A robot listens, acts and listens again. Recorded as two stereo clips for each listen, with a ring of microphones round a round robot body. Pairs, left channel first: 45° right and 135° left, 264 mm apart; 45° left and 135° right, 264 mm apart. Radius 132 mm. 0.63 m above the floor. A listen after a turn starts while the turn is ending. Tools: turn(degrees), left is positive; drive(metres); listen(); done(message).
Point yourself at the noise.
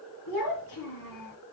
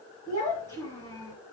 turn(degrees=-30)
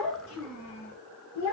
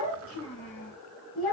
done("Facing the child speaking, over 4 m away.")